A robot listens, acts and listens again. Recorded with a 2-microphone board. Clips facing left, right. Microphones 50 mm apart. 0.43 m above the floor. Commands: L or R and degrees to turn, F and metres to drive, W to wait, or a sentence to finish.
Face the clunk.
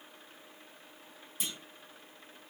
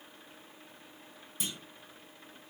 L30
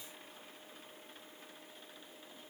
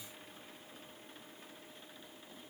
W
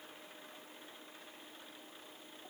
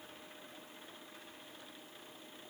I heard a clunk, but can't make it out now. It was about 25° right or 145° left.